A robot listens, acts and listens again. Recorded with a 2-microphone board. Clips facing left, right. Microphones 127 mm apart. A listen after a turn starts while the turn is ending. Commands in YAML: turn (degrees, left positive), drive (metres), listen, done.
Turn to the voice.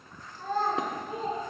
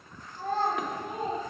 turn: -60
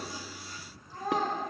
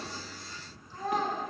turn: 15
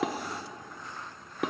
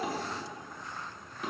listen: true
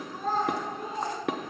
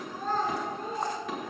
turn: 10
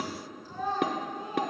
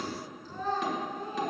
turn: 10
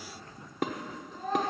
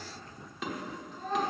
done: "Facing the child speaking."